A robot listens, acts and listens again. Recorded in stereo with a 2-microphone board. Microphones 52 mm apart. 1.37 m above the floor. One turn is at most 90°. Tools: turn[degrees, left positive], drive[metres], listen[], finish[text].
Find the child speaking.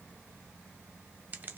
Action: listen[]
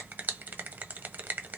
Action: listen[]
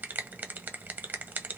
Action: finish[I can't make out a child speaking, only a finger snap.]